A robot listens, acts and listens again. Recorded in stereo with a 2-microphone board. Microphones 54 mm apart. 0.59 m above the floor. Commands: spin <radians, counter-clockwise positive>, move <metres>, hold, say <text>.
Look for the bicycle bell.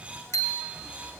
spin 1.22
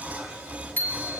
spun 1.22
spin 0.61
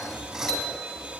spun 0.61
hold
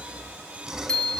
spin 0.26
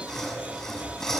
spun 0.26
hold
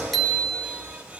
say Facing the bicycle bell, 2 to 4 m away.